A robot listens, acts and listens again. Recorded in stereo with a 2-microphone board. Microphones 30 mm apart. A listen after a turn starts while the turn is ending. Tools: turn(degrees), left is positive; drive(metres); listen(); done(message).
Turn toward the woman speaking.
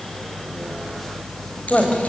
turn(degrees=35)
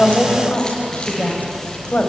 turn(degrees=110)
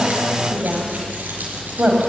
turn(degrees=-45)
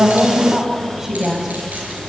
turn(degrees=-10)
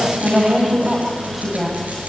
done("Facing the woman speaking, over 4 m away.")